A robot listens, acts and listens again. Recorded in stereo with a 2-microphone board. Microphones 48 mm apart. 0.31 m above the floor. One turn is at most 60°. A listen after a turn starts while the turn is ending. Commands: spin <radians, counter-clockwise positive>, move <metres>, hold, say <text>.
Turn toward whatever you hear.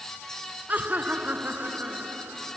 spin -0.70
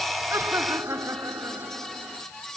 spin -1.05
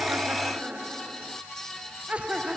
spin -0.44
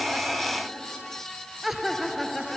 say Facing the laughter.